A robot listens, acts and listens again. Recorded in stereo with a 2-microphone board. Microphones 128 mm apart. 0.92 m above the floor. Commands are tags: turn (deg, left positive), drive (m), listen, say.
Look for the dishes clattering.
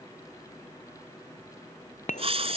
<turn deg="90"/>
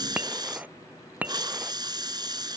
<turn deg="-10"/>
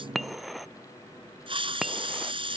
<say>Found it: dishes clattering, straight ahead.</say>